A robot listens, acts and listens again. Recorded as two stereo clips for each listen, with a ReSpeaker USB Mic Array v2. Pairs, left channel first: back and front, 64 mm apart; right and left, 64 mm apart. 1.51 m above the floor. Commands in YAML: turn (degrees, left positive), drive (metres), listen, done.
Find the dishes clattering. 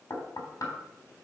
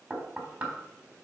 listen: true
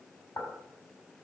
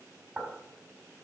listen: true
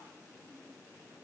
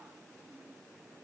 done: "I can't make out dishes clattering, only knocking."